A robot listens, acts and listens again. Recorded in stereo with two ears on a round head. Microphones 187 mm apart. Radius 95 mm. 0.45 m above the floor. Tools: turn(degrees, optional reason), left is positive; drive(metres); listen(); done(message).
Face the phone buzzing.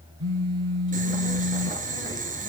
turn(degrees=-90)
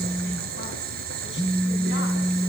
turn(degrees=10, reason="So it is at 10° left.")
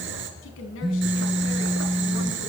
done("Facing the phone buzzing.")